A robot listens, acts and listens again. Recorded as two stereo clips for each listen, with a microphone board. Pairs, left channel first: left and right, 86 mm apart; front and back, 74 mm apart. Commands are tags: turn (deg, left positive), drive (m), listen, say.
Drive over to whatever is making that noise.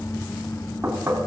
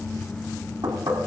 <turn deg="-155"/>
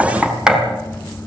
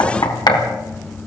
<turn deg="-10"/>
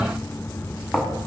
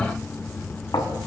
<drive m="1.0"/>
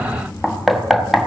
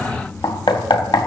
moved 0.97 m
<drive m="1.0"/>
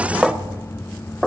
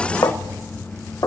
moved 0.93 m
<drive m="1.0"/>
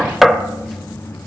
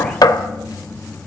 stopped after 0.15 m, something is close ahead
<say>Arrived at the knocking, straight ahead.</say>